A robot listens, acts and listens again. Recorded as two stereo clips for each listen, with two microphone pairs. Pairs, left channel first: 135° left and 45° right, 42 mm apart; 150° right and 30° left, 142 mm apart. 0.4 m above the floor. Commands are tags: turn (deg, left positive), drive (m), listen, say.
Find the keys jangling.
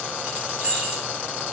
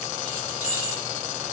<turn deg="20"/>
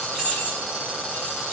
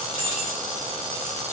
<say>Facing the keys jangling.</say>